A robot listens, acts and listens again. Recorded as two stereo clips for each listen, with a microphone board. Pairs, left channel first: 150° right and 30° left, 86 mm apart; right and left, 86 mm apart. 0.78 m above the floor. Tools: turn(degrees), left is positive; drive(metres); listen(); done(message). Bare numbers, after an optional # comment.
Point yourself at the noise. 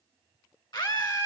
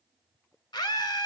# The scream: 125° right.
turn(-125)
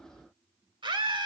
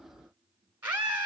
# The scream is now 20° left.
turn(20)
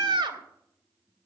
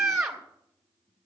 done("Found it: a scream, straight ahead, 2 to 4 m away.")